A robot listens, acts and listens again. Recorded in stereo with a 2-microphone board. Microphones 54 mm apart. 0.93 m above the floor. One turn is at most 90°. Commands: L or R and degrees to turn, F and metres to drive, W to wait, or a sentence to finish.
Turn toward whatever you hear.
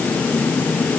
W
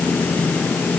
W
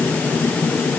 I can't make out anything.